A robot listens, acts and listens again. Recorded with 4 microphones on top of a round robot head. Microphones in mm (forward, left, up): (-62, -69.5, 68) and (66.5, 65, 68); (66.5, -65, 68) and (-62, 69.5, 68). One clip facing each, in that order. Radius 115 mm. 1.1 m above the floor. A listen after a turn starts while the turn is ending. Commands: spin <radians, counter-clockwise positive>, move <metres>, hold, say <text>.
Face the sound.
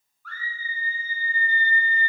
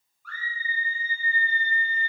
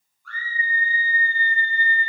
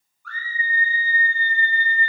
spin 2.18
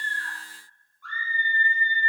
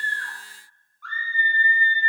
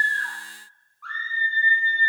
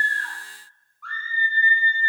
spin 0.79
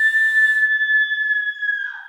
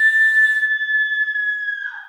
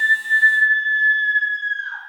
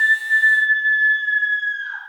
say Found it: a scream, straight ahead, 1 to 2 m away.